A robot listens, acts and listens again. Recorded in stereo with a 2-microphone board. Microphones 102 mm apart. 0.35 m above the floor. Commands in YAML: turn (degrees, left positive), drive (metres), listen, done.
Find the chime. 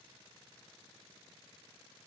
listen: true
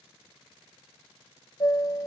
turn: 35
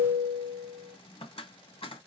turn: 110
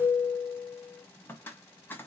turn: 20
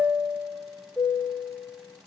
done: "Found it: a chime, straight ahead."